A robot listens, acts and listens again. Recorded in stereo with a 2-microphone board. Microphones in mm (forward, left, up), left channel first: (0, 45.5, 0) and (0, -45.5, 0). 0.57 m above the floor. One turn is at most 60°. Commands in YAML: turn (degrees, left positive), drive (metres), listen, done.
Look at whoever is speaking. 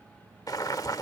listen: true
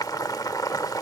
listen: true
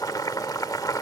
done: "I can't make out anyone speaking, only boiling."